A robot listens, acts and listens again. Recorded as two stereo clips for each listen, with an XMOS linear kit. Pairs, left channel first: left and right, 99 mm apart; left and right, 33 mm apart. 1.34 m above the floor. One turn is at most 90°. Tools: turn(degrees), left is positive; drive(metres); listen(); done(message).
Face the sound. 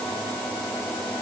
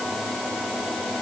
listen()
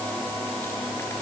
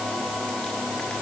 listen()
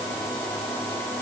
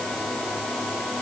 done("I can't make out anything to turn to.")